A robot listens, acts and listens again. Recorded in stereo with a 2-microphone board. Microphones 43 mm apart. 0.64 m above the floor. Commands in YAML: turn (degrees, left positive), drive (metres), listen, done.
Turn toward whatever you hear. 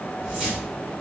turn: -20
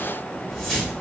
done: "Found it: a whoosh, straight ahead, 1 to 2 m away."